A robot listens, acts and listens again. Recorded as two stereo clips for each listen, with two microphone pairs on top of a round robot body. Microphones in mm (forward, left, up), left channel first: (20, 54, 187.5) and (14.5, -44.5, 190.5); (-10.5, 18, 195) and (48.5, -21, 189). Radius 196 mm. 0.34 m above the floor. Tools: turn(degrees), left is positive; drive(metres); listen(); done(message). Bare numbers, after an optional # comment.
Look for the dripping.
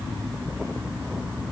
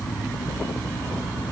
listen()
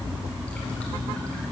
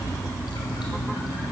listen()
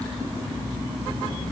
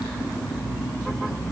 done("I can't make out dripping.")